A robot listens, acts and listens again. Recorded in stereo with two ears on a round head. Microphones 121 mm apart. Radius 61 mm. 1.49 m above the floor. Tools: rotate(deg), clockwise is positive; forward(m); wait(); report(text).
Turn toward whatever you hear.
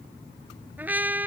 rotate(30)
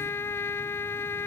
rotate(-15)
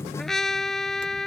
report("Found it: a trumpet, straight ahead.")